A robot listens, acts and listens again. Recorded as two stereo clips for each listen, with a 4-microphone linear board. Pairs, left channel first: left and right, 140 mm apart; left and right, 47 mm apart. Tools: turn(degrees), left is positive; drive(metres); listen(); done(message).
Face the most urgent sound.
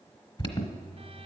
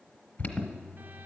turn(degrees=40)
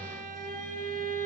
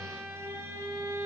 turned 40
listen()
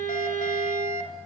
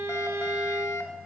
turn(degrees=95)
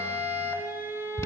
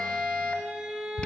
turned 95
turn(degrees=20)
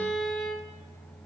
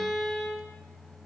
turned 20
listen()
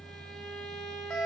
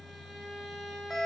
done("Facing the alarm, 1 to 2 m away.")